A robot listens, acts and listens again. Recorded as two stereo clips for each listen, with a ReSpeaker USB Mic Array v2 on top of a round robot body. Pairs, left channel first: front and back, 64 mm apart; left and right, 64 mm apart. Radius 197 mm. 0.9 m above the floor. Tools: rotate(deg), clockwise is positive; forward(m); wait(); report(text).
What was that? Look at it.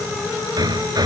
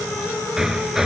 rotate(175)
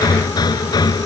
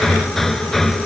report("Facing the hammering.")